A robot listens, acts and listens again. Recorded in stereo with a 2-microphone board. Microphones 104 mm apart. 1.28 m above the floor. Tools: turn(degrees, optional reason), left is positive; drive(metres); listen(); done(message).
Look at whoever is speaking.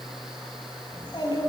turn(degrees=45, reason="The child speaking: about 45° left or 135° left.")
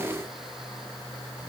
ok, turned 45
listen()
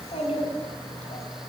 turn(degrees=95, reason="So it is at 95° left.")
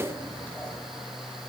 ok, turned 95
turn(degrees=15, reason="The child speaking is now 15° left.")
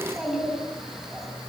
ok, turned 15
done("Found it: a child speaking, straight ahead, over 4 m away.")